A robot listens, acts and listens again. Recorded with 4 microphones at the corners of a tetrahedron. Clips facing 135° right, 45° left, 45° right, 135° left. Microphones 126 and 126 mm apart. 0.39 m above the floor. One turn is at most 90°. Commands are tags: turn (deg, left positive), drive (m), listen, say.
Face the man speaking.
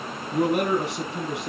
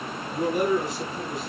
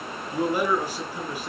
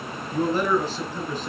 <turn deg="-90"/>
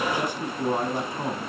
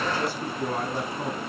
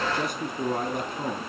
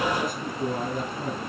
<turn deg="-65"/>
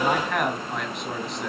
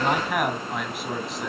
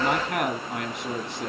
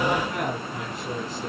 <turn deg="-45"/>
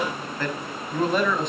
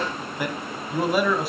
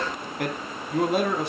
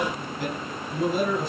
<turn deg="-40"/>
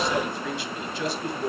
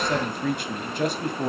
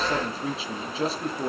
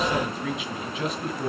<turn deg="10"/>
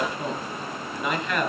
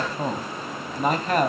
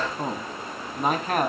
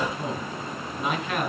<say>Found it: a man speaking, straight ahead, 2 to 4 m away.</say>